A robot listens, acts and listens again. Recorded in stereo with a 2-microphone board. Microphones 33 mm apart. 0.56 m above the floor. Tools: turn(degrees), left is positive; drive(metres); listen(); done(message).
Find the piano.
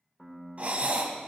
turn(degrees=30)
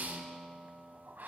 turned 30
turn(degrees=-30)
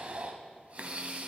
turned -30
listen()
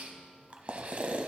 listen()
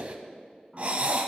done("I heard a piano from this way, but can't make it out now.")